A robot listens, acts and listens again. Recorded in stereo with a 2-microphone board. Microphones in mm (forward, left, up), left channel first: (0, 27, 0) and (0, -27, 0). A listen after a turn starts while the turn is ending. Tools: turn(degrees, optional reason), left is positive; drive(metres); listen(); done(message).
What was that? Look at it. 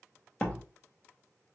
turn(degrees=20, reason="The door slam: about 20° left or 160° left.")
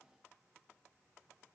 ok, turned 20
listen()
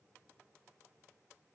done("I heard a door slam, but can't make it out now. It was about straight ahead or 140° left.")